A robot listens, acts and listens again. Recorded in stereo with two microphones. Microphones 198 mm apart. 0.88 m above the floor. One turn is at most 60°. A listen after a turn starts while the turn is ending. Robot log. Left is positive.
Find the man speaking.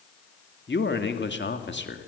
note: The man speaking: about 65° left or 115° left.
cmd yaw +60
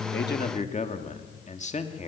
note: So it is at 40° left.
cmd yaw +40
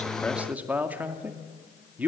note: The man speaking is now 10° right.
cmd yaw -10
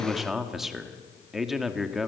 end: Facing the man speaking.